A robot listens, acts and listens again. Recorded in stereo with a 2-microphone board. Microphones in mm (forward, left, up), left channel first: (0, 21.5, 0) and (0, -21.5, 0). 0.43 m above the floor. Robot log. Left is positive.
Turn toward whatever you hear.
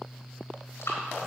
cmd yaw +90
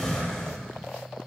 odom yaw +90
end: Facing the breathing, over 4 m away.